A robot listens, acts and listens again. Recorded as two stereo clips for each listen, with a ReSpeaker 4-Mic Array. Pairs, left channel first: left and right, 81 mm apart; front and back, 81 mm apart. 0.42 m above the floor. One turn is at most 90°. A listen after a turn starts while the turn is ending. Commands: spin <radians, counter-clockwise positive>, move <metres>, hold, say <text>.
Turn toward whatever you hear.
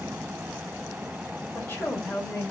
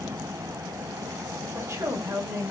spin 1.57
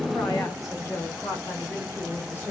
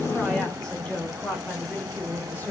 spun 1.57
spin 0.87
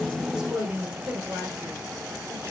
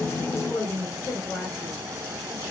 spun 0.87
spin -0.70
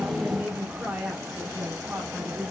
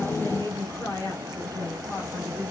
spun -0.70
spin -0.17
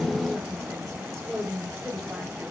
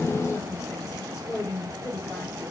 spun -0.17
say Facing the woman speaking, 1 to 2 m away.